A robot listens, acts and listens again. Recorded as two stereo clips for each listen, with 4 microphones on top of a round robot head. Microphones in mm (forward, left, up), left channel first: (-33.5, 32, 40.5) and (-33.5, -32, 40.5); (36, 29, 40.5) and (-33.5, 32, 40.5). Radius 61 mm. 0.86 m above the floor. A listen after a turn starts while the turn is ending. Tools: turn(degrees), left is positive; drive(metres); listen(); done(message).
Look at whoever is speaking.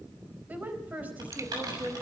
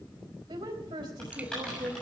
turn(degrees=-155)
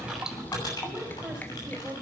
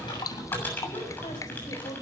turn(degrees=-10)
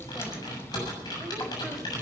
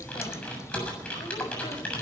listen()
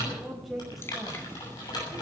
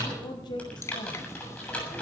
done("Facing the woman speaking, over 4 m away.")